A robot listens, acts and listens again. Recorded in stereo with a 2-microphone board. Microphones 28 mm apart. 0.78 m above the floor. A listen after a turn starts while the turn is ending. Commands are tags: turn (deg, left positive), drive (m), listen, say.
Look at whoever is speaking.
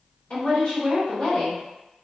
<turn deg="40"/>
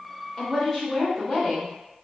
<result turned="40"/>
<say>Facing the woman speaking, 1 to 2 m away.</say>